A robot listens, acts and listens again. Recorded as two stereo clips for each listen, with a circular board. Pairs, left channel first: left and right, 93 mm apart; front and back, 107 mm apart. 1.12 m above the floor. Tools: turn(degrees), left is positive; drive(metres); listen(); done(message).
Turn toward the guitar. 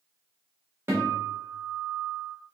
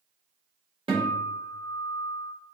turn(degrees=-150)
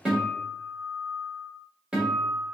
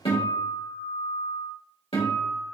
turn(degrees=-10)
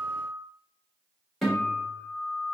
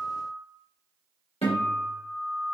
done("Facing the guitar, 1 to 2 m away.")